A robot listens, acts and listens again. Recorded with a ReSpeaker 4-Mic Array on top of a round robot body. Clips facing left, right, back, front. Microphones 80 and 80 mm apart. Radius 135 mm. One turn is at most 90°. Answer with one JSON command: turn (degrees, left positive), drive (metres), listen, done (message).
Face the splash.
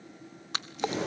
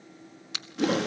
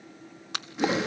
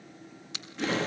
{"turn": 90}
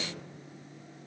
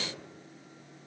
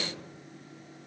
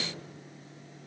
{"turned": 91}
{"turn": 50}
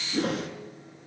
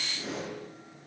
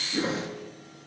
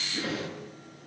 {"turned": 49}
{"done": "Facing where the splash came from. I can't hear it now."}